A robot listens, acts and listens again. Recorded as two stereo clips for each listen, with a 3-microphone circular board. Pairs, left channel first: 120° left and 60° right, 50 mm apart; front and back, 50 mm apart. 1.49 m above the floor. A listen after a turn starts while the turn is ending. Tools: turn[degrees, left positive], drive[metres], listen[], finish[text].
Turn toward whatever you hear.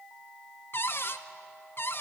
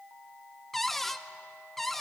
Thought: The cupboard door: 85° left.
Action: turn[85]
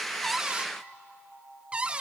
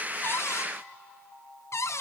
Action: finish[Found it: a cupboard door, straight ahead, under 1 m away.]